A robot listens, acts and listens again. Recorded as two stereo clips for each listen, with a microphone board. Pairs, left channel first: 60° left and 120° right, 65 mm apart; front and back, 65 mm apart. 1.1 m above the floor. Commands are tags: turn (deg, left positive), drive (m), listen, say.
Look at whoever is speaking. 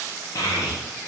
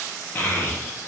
<turn deg="60"/>
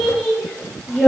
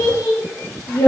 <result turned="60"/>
<turn deg="-20"/>
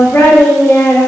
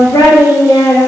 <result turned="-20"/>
<say>Found it: a child speaking, straight ahead, 1 to 2 m away.</say>